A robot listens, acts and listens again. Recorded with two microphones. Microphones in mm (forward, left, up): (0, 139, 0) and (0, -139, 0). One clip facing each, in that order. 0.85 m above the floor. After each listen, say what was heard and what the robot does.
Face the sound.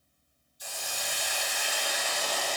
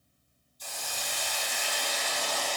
Turn 30° left.
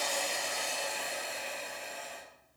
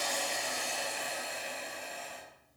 So it is at 140° left. Turn 140° left.
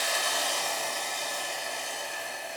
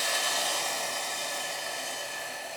The hiss is now 20° left. Turn 20° left.
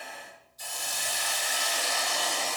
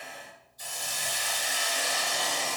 Found it: a hiss, straight ahead.